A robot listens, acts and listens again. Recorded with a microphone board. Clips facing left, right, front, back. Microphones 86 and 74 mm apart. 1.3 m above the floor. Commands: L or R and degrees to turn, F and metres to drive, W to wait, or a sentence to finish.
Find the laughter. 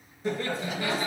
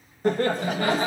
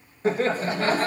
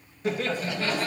R50
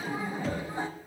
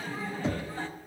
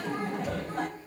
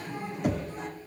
L20
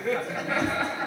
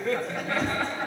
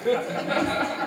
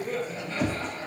Found it: laughter, straight ahead.